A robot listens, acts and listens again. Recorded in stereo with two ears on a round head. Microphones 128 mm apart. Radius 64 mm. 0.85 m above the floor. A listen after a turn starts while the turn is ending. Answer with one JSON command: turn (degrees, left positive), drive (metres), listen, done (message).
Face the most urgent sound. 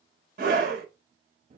{"turn": -65}
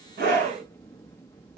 {"turn": -45}
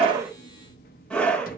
{"done": "Found it: a scream, straight ahead."}